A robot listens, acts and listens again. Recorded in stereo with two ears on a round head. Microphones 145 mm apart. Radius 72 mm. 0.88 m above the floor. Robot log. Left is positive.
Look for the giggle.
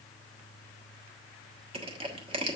cmd idle
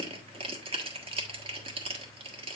cmd idle
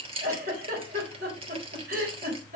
note: The giggle: about 60° right or 120° right.
cmd yaw -60
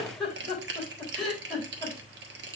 end: Found it: a giggle, straight ahead, 2 to 4 m away.